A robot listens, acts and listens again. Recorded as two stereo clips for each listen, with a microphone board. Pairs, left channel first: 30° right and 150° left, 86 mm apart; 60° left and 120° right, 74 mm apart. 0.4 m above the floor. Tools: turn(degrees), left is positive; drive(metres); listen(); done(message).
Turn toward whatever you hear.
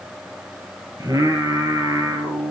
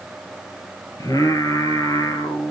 turn(degrees=100)
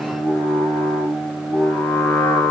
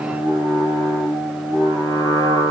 turn(degrees=40)
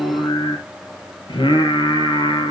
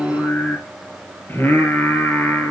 done("Found it: singing, straight ahead, 2 to 4 m away.")